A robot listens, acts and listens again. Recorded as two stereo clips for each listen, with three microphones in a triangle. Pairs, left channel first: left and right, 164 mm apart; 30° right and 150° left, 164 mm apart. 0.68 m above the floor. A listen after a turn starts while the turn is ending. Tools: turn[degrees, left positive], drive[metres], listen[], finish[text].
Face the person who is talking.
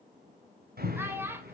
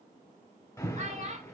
Thought: The child speaking: 165° right.
Action: turn[-165]
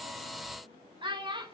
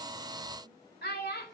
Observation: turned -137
Thought: The child speaking is now 30° right.
Action: turn[-30]
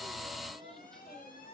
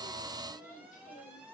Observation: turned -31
Action: listen[]
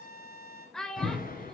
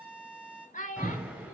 Action: finish[Found it: a child speaking, straight ahead, 2 to 4 m away.]